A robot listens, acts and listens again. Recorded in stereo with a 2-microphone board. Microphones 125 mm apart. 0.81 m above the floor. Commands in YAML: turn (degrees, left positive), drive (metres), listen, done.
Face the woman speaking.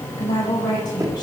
turn: 35
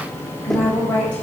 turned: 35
turn: 10
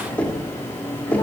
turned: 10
listen: true
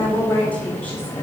turn: 15
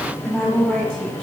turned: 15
done: "Facing the woman speaking, over 4 m away."